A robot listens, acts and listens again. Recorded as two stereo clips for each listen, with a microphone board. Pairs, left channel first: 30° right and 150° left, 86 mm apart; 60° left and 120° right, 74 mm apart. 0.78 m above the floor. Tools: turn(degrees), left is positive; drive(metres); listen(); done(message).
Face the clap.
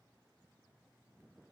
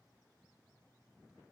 listen()
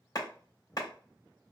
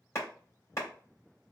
turn(degrees=10)
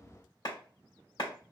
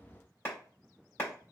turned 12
done("Found it: a clap, straight ahead, 1 to 2 m away.")